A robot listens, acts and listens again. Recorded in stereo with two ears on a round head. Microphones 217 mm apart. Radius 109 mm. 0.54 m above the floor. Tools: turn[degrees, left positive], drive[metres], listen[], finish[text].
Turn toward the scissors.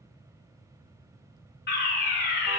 Action: listen[]
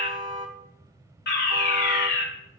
Action: listen[]
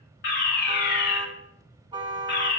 Action: finish[I can't make out scissors, only a fire alarm and a car horn.]